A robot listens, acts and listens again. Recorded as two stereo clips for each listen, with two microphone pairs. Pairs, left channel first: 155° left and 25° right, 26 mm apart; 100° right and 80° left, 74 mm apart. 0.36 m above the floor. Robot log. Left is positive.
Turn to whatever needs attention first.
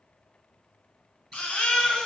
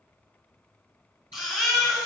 note: The baby crying: 170° left.
cmd yaw +170
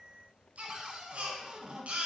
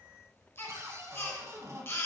note: The baby crying is now 45° right.
cmd yaw -45
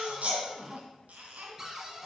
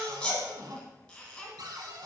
note: The baby crying is now 25° right.
cmd yaw -25
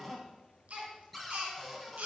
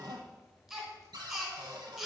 end: Found it: a baby crying, straight ahead, 1 to 2 m away.